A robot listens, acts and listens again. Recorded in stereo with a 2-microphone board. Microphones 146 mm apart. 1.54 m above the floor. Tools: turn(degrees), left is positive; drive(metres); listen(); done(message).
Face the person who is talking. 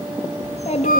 turn(degrees=50)
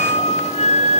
listen()
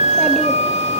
listen()
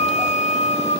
done("I heard a child speaking, but can't make it out now. It was about straight ahead or 80° left.")